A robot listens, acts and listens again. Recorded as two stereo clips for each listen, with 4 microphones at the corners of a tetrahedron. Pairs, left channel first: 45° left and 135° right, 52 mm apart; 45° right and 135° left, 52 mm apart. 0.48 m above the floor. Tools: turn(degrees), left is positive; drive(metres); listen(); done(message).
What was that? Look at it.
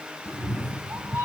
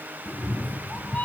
turn(degrees=-105)
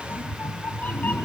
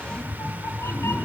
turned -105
turn(degrees=-15)
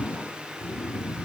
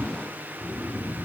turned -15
done("Found it: a cat meowing, straight ahead.")